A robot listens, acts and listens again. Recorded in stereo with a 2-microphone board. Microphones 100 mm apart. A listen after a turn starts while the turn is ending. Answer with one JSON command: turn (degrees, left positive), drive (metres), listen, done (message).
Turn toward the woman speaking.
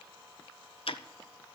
{"listen": true}
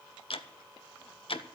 {"listen": true}
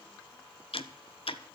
{"done": "I can't make out a woman speaking, only ticking."}